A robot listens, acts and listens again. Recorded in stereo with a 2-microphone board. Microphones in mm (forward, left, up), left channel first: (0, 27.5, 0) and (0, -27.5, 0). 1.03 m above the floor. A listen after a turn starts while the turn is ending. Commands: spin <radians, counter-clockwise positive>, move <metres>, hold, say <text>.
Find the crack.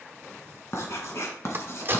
spin -0.70
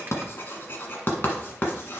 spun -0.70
hold
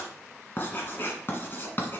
say I heard a crack, but can't make it out now. It was about straight ahead or 100° right.